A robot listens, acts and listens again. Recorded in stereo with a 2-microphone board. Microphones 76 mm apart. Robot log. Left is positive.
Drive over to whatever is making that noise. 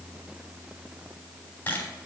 note: The camera shutter: about 30° left or 150° left.
cmd yaw +30
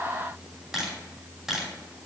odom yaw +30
cmd fwd 1.0
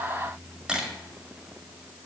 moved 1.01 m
note: The camera shutter is now 10° right.
cmd yaw -10
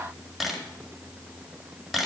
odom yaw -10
cmd fwd 1.0
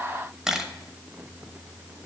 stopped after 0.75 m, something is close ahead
end: Arrived at the camera shutter, straight ahead.